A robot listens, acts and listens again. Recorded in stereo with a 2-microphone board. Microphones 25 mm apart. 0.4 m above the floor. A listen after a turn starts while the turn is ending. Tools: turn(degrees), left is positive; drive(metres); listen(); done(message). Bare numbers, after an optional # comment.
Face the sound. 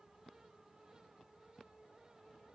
listen()
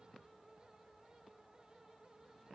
listen()
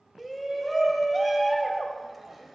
turn(-30)
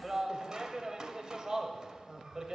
# So it is at 145° right.
turn(-145)
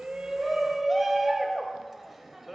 done("Facing the shout, 1 to 2 m away.")